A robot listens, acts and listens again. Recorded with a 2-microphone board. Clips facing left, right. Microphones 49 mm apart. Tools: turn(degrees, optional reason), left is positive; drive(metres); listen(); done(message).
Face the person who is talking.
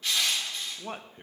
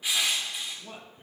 turn(degrees=50, reason="The man speaking: about 50° left or 130° left.")
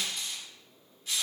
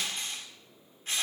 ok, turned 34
listen()
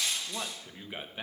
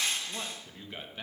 turn(degrees=15, reason="So it is at 15° left.")
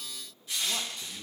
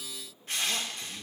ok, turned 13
listen()
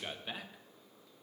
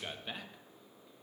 done("Facing the man speaking.")